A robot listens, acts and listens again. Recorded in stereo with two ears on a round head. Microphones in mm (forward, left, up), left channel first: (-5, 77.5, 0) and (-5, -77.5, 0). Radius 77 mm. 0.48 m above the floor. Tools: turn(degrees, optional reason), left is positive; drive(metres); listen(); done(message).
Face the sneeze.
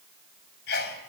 turn(degrees=70, reason="The sneeze: about 70° left or 110° left.")
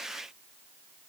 listen()
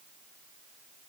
done("I heard a sneeze, but can't make it out now. It was about straight ahead or 40° left.")